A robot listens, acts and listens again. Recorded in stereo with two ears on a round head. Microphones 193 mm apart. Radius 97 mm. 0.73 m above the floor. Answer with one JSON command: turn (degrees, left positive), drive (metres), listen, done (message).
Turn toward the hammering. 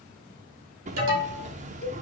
{"turn": -35}
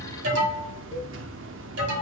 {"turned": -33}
{"turn": -110}
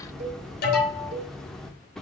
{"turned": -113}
{"done": "Found it: hammering, straight ahead, under 1 m away."}